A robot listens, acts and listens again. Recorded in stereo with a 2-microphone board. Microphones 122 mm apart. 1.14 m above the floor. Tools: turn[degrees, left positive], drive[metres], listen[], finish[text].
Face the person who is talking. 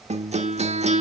Action: listen[]
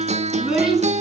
Action: turn[-30]
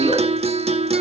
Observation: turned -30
Action: listen[]
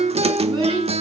Thought: So it is at 140° right.
Action: turn[-140]
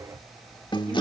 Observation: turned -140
Action: listen[]
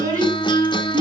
Thought: The child speaking is now 30° right.
Action: turn[-30]
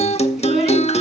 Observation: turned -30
Action: listen[]
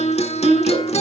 Action: finish[Facing the child speaking, over 4 m away.]